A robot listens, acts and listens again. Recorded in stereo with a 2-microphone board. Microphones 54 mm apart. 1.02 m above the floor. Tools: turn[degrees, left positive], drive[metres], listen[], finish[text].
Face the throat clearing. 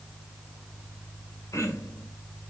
Action: turn[90]
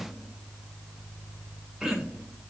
Thought: So it is at 10° right.
Action: turn[-10]
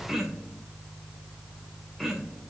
Action: finish[Found it: throat clearing, straight ahead, 2 to 4 m away.]